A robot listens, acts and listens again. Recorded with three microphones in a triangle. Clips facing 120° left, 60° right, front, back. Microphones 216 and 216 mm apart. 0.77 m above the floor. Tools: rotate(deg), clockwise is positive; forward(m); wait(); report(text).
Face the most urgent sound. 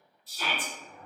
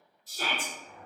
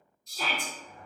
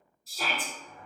rotate(95)
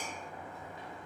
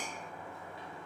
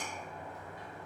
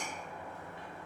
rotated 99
wait()
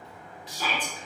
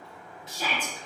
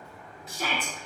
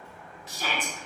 report("Facing the shout, under 1 m away.")